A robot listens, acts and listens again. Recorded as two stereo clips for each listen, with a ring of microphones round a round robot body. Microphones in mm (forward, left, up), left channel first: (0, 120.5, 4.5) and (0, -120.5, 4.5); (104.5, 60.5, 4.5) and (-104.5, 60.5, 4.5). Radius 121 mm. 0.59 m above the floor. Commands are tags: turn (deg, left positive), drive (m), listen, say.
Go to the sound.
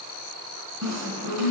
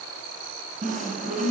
<turn deg="-110"/>
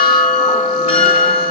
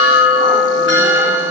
<turn deg="30"/>
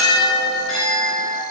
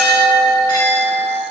<drive m="1.0"/>
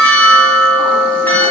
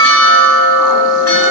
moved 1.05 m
<drive m="1.0"/>
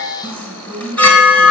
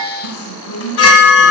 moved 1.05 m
<drive m="1.0"/>
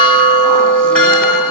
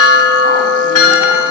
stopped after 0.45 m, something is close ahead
<say>I am next to the chime.</say>